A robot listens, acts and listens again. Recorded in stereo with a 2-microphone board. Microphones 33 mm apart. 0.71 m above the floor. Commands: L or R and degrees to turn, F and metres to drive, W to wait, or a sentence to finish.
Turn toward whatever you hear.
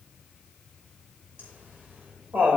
R65
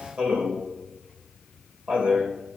R45
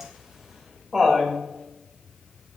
R20
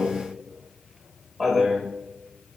Found it: laughter, straight ahead.